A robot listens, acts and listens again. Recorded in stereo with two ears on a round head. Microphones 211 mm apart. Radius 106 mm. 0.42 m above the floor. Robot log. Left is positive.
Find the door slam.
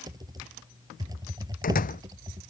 note: The door slam: about 35° left or 145° left.
cmd yaw +35
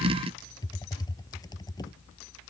cmd idle
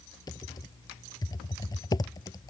end: I heard a door slam, but can't make it out now. It was about straight ahead or 110° left.